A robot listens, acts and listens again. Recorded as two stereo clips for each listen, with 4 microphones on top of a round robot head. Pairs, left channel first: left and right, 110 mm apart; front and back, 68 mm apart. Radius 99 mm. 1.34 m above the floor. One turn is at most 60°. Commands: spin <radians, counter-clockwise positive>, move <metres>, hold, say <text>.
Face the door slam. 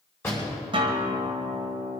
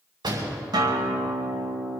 spin 1.05
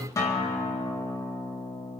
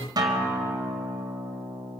spin 1.05
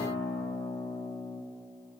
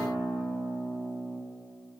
spin 0.79
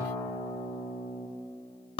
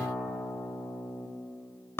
say Facing where the door slam came from. I can't hear it now.